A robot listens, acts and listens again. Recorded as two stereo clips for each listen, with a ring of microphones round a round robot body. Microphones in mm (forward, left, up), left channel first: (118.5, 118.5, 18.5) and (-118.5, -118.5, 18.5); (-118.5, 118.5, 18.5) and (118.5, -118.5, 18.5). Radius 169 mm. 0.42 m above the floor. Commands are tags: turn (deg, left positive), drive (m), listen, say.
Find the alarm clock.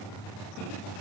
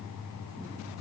<listen/>
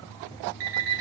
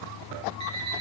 <turn deg="-120"/>
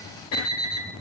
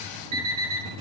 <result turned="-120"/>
<say>Facing the alarm clock, 2 to 4 m away.</say>